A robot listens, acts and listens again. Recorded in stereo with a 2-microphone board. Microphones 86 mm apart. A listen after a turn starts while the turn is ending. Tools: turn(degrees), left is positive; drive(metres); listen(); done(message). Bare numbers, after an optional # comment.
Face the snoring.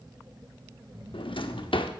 # The snoring: about 55° right or 125° right.
turn(-55)
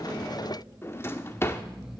done("Facing the snoring, 2 to 4 m away.")